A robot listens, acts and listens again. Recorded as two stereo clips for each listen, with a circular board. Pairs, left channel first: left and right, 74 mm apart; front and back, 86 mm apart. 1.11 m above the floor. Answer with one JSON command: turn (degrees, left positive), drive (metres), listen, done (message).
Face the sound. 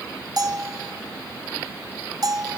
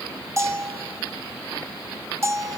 {"turn": -125}
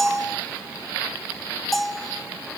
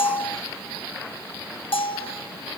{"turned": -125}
{"done": "Facing the bell, under 1 m away."}